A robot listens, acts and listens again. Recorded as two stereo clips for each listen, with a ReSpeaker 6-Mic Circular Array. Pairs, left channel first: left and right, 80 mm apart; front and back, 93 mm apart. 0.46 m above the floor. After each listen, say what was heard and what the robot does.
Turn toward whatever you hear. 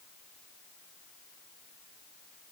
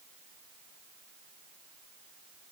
Keep listening.
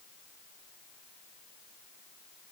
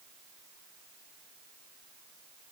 Keep listening.
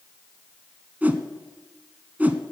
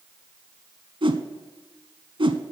The whoosh: 160° right. Turn 160° right.
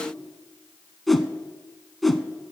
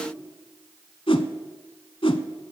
Facing the whoosh.